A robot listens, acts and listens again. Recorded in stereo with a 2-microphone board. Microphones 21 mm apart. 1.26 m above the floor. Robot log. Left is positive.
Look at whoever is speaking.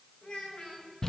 note: The child speaking: about 65° left or 115° left.
cmd yaw +65
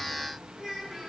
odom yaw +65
end: Found it: a child speaking, straight ahead.